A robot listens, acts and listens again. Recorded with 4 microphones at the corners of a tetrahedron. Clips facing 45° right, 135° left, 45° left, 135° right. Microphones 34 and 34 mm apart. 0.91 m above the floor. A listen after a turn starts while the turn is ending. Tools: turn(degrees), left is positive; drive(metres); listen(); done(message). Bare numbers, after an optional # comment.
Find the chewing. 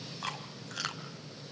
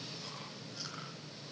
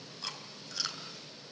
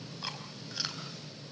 # The chewing: 60° right.
turn(-60)
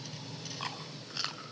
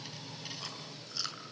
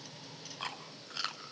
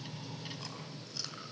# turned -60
done("Found it: chewing, straight ahead.")